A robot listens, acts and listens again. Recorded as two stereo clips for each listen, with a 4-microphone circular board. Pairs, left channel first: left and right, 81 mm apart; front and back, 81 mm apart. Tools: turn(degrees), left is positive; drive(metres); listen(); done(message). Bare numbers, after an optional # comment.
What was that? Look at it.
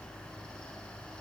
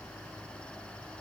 listen()
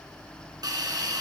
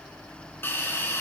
# The hiss: 60° right.
turn(-60)
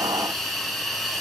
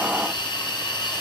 done("Found it: a hiss, straight ahead.")